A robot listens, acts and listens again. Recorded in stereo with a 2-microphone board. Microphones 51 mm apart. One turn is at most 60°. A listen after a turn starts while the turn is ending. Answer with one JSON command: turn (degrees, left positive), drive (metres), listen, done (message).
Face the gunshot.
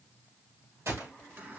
{"turn": -60}
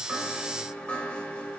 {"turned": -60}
{"listen": true}
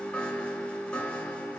{"done": "I heard a gunshot, but can't make it out now. It was about 10° right or 50° right."}